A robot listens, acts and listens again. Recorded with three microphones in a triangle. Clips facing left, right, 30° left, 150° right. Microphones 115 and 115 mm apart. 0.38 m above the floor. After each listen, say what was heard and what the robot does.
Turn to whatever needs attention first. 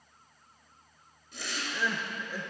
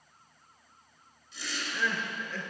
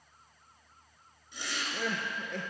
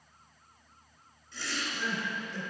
The crying: 15° left. Turn 15° left.
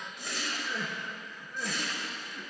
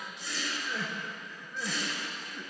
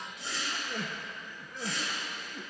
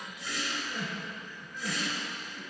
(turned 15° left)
Facing the crying, under 1 m away.